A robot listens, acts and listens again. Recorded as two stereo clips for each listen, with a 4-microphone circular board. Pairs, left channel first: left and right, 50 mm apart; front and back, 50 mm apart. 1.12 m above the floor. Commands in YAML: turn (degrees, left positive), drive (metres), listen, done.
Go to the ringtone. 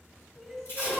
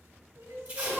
listen: true
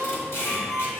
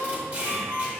turn: 30
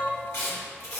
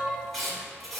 listen: true
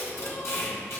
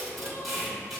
listen: true
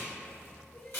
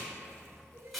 done: "I heard a ringtone from this way, but can't make it out now. I did not reach it."